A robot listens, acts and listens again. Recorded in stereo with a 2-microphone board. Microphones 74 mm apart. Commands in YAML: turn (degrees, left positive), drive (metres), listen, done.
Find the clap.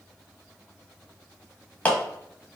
turn: 20
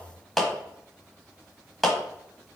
done: "Facing the clap."